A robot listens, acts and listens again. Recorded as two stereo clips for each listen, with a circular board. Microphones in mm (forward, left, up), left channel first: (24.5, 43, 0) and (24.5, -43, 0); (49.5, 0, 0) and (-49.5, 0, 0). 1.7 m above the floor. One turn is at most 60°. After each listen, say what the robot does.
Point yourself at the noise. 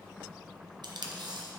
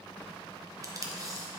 Turn 60° right.
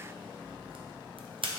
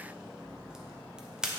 Turn 60° right.
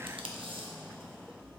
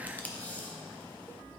Turn 60° right.
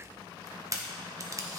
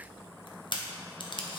Turn 40° right.
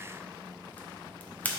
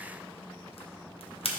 Turn 15° left.
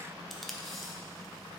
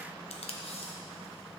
Found it: tape being pulled, straight ahead, under 1 m away.